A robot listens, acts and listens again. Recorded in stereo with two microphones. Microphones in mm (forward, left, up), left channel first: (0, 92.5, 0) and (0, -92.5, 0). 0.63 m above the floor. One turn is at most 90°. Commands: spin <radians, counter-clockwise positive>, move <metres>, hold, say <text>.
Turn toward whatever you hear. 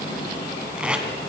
spin -0.52
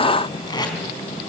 spin 0.44
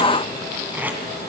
spin -0.17
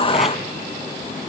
hold
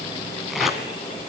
hold
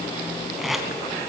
say Found it: tape being pulled, straight ahead, 2 to 4 m away.